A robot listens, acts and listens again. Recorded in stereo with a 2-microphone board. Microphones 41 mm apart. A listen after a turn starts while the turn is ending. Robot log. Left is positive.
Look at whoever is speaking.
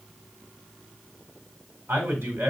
note: The man speaking: about 70° right or 110° right.
cmd yaw -70
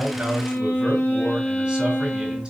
cmd idle
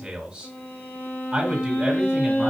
note: So it is at 25° right.
cmd yaw -25
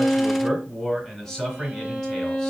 end: Facing the man speaking.